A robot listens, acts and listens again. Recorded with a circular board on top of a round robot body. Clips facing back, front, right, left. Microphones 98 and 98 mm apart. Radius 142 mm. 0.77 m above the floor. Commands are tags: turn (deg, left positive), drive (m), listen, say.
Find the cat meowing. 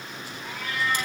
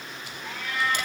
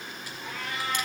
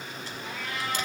<turn deg="-100"/>
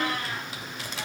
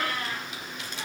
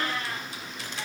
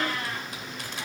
<turn deg="50"/>
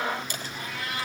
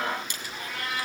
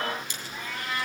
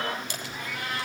<turn deg="10"/>
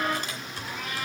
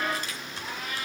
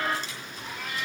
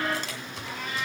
<say>Found it: a cat meowing, straight ahead.</say>